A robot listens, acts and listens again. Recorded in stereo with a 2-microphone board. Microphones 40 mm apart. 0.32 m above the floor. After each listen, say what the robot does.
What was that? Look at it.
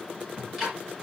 Turn 30° right.
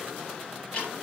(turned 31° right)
Turn 25° left.
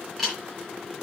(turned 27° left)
Facing the ticking.